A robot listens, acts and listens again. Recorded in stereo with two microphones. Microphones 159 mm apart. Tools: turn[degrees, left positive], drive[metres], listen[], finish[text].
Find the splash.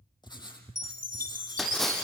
Action: turn[30]
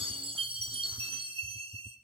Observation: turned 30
Action: listen[]
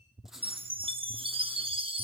Action: finish[I heard a splash, but can't make it out now. It was about 30° right or 150° left.]